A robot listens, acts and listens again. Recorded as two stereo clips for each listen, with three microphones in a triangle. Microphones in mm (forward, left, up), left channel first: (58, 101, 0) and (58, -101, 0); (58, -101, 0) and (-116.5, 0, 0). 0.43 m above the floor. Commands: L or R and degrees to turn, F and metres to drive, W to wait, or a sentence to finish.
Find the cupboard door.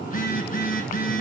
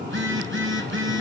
W
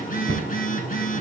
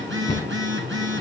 R85
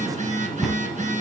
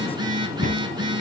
Facing the cupboard door, 2 to 4 m away.